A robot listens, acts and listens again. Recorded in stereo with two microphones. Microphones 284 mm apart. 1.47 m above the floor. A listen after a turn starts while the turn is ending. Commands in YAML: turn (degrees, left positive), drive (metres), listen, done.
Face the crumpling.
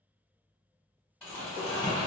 turn: 30
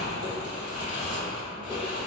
turn: 145
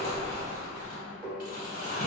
turn: 40
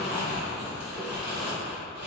done: "Facing the crumpling, 1 to 2 m away."